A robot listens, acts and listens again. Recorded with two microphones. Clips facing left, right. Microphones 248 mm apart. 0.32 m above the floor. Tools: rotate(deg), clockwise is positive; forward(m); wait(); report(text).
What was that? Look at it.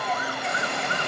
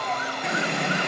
rotate(70)
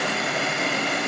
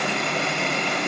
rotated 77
report("Found it: a running tap, straight ahead.")